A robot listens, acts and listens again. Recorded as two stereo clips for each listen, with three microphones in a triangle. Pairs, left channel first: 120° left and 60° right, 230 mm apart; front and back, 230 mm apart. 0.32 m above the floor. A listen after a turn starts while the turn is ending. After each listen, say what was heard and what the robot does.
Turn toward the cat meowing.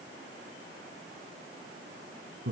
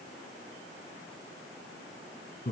Keep listening.
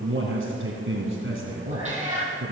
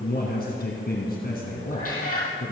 Facing the cat meowing.